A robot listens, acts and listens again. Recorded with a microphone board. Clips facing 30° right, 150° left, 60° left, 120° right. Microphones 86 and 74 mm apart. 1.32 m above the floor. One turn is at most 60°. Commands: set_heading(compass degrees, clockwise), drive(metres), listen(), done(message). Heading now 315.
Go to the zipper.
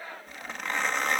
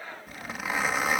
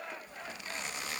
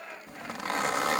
set_heading(15)
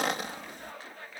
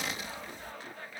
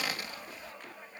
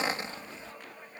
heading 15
set_heading(75)
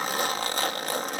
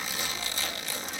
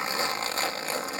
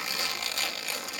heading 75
drive(1.0)
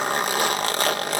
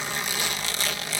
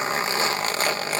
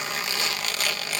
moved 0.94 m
drive(1.0)
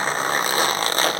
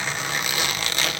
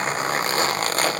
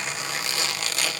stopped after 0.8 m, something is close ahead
set_heading(55)
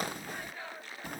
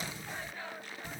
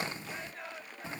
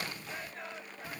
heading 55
done("Arrived at the zipper, straight ahead.")